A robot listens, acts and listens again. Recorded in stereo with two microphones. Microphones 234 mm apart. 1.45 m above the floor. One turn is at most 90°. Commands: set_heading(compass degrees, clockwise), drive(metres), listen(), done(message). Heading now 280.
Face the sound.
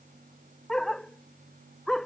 set_heading(250)
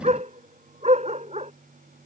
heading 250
set_heading(280)
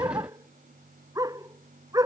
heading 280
set_heading(295)
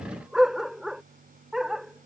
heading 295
done("Found it: a dog barking, straight ahead.")